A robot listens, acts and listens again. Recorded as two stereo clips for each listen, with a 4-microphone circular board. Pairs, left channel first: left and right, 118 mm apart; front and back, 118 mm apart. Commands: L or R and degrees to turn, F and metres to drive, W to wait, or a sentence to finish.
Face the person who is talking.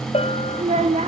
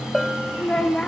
R80
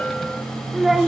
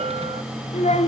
Found it: a child speaking, straight ahead, 1 to 2 m away.